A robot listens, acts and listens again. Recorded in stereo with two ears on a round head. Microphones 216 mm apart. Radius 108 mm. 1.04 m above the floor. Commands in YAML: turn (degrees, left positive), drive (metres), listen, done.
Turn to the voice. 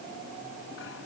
listen: true
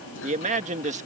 turn: -30
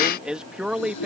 done: "Found it: a man speaking, straight ahead."